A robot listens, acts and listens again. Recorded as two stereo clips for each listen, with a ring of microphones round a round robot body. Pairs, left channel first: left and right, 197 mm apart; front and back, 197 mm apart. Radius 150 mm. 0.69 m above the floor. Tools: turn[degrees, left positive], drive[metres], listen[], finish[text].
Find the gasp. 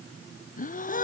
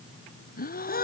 Thought: The gasp: 45° left.
Action: turn[45]
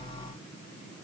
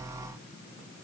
Action: finish[Facing where the gasp came from. I can't hear it now.]